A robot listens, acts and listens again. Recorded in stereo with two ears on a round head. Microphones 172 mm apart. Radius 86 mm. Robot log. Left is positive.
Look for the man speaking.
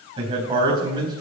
note: The man speaking: about 25° right or 155° right.
cmd yaw -25
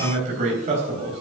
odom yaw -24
note: The man speaking: about 35° right or 145° right.
cmd yaw -35
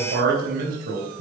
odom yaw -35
note: So it is at 130° right.
cmd yaw -130
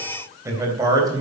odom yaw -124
note: The man speaking is now 20° right.
cmd yaw -20
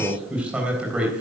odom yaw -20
end: Facing the man speaking, 2 to 4 m away.